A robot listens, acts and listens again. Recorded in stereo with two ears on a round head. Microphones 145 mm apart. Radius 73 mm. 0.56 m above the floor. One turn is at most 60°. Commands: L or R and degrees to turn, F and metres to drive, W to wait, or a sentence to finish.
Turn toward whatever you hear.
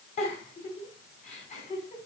L50
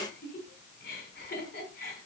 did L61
L60
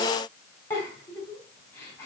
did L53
L15
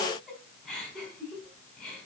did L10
Facing the giggle.